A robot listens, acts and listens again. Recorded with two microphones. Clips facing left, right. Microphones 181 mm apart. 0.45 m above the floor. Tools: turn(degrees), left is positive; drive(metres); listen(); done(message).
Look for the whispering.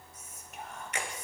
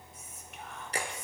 turn(degrees=45)
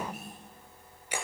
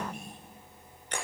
done("Found it: whispering, straight ahead.")